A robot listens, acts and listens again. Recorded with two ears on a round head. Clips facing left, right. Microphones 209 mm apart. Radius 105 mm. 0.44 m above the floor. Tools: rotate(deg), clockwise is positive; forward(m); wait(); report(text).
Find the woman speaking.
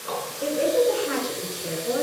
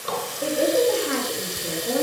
rotate(-30)
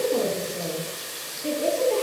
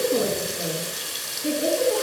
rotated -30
rotate(10)
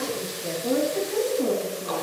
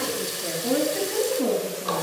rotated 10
report("Found it: a woman speaking, straight ahead.")